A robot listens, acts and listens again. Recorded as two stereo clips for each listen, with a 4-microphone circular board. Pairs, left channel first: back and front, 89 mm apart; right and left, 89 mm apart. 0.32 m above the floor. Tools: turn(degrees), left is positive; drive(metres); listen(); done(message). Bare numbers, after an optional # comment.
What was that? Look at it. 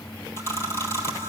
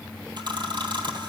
# The camera shutter: 120° left.
turn(120)
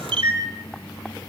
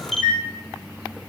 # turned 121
done("Facing the camera shutter, 1 to 2 m away.")